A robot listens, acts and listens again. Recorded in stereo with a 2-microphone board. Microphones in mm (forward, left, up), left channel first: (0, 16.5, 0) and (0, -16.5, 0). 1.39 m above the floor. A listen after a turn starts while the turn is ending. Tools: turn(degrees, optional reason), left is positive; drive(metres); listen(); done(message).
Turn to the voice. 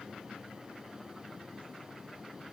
listen()
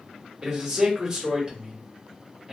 turn(degrees=-20, reason="The man speaking: about 20° right or 160° right.")
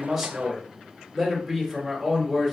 done("Facing the man speaking.")